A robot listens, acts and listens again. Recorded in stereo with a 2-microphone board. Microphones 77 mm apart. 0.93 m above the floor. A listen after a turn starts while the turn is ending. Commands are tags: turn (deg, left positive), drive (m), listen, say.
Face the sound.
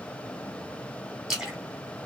<turn deg="-30"/>
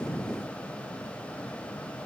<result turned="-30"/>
<listen/>
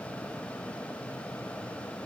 <say>I heard a splash, but can't make it out now. It was about 25° left or 145° right.</say>